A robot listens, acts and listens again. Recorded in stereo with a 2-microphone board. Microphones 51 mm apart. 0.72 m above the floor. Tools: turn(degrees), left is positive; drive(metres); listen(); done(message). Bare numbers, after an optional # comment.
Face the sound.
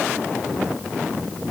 listen()
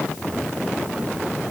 listen()
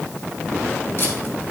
# The tape being pulled: about 50° left or 130° left.
turn(50)
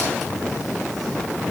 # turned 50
listen()
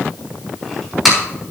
done("Found it: tape being pulled, straight ahead, over 4 m away.")